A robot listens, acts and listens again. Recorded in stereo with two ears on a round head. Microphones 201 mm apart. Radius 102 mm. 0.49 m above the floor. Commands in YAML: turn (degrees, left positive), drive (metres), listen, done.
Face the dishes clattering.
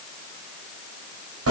listen: true
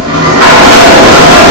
listen: true
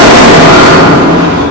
done: "I can't make out dishes clattering to turn to."